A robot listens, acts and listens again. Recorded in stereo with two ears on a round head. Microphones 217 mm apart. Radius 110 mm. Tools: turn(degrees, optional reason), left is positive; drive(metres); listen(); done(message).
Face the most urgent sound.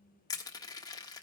listen()
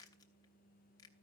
listen()
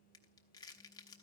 done("I can't make out anything urgent, only crushing.")